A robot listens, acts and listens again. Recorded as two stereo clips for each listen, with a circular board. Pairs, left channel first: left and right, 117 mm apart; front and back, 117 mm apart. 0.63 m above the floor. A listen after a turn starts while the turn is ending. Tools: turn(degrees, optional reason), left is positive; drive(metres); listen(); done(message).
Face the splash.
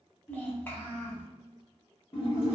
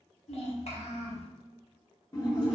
turn(degrees=55, reason="The splash: 55° left.")
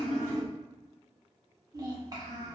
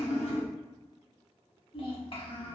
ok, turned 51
done("I heard a splash from this way, but can't make it out now.")